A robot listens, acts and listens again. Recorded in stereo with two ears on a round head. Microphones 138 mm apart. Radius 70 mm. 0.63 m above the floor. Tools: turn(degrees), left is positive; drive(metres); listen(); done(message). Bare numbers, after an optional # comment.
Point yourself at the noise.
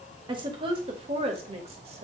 # The woman speaking: about 40° right or 140° right.
turn(-40)
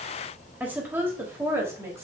# So it is at 15° right.
turn(-15)
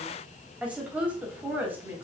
# The woman speaking is now 15° right.
turn(-15)
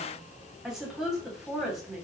done("Found it: a woman speaking, straight ahead.")